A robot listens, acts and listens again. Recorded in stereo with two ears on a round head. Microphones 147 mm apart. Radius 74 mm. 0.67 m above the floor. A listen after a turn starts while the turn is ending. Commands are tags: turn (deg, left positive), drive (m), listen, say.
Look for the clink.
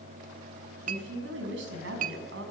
<turn deg="-45"/>
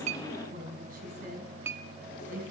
<turn deg="-15"/>
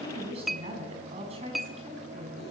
<say>Facing the clink, under 1 m away.</say>